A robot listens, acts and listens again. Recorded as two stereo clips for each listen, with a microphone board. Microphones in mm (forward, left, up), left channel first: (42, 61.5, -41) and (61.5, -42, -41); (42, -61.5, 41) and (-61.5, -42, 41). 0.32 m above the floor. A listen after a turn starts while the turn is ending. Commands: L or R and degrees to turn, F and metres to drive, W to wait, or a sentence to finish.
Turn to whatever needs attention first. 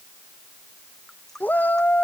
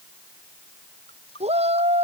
L175
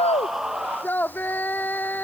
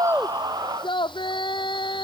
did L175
L30
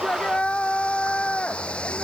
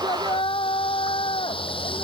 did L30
L20
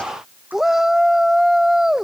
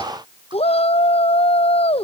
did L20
Found it: a shout, straight ahead.